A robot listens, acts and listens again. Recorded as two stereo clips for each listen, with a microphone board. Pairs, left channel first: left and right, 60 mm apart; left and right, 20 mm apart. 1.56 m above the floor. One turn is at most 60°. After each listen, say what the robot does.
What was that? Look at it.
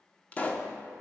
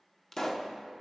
Turn 25° left.
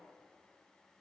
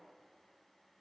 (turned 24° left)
Keep listening.
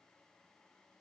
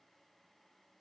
I heard a pop, but can't make it out now. It was about straight ahead or 135° left.